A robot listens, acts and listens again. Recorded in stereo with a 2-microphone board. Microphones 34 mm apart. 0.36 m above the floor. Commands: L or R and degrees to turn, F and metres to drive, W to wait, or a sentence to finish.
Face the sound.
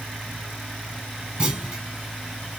R25
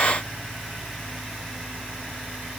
W
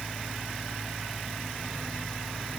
I heard a clunk, but can't make it out now. It was about straight ahead or 130° right.